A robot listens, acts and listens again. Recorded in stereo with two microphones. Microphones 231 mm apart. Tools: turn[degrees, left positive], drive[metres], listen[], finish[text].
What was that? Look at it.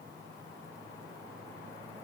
Action: listen[]
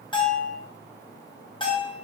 Thought: The bell: about 20° left or 160° left.
Action: turn[20]
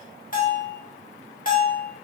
Thought: So it is at 135° left.
Action: turn[135]
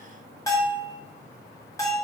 Thought: The bell is now 15° left.
Action: turn[15]
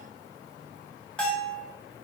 Action: finish[Found it: a bell, straight ahead, under 1 m away.]